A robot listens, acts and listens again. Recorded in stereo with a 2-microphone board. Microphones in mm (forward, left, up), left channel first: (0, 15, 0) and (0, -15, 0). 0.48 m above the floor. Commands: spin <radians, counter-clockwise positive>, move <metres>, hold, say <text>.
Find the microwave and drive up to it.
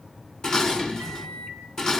spin 0.70
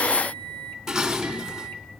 spin 1.75
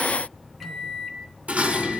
move 1.0
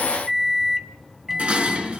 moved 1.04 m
move 1.0
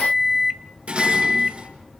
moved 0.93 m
spin -0.17
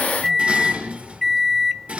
move 1.0
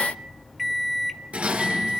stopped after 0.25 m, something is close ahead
say I am next to the microwave.